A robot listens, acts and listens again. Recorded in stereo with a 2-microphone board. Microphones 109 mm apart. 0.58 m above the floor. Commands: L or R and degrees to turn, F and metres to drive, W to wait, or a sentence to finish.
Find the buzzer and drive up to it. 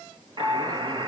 R45
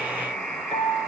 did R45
F1.0
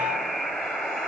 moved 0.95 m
F1.0
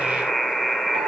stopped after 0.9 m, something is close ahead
I am next to the buzzer.